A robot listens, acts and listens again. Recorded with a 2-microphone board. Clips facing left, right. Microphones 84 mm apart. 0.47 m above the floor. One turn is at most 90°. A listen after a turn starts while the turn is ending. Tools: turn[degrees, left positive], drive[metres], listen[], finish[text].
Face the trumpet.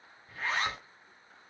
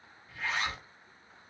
Action: listen[]
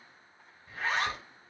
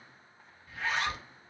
Action: listen[]
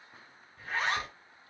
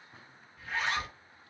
Action: finish[I can't make out a trumpet, only a zipper.]